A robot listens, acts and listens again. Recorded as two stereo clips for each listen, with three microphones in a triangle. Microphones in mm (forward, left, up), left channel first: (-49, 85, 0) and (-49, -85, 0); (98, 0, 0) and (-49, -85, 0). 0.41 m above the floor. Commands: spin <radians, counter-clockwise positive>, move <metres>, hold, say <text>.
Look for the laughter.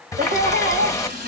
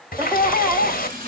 spin -1.31
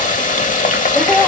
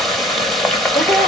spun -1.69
spin 0.17
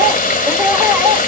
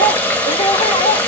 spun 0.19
spin -0.35
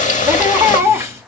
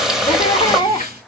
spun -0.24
spin -0.44
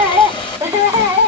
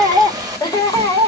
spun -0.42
spin -0.44
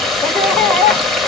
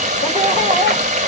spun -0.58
spin 0.17
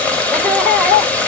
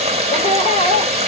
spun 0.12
say Found it: laughter, straight ahead, 1 to 2 m away.